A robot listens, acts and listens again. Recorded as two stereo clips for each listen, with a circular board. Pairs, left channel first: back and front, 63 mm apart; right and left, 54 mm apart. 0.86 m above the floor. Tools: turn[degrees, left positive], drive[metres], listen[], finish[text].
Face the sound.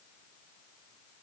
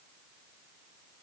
Action: listen[]
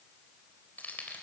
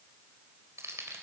Thought: The keys jangling: 120° left.
Action: turn[120]
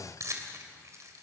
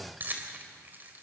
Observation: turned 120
Thought: The keys jangling is now 35° left.
Action: turn[35]
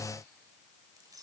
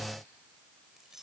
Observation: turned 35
Action: listen[]
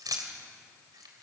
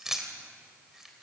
Action: finish[Found it: keys jangling, straight ahead.]